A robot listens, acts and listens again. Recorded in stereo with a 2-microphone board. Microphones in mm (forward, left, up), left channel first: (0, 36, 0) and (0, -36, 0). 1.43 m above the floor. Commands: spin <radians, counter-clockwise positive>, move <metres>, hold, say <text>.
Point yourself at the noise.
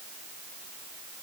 hold
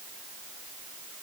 hold
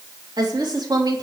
spin -1.31
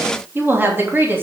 spin -0.52
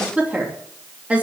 spin -0.35
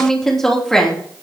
say Facing the woman speaking, 2 to 4 m away.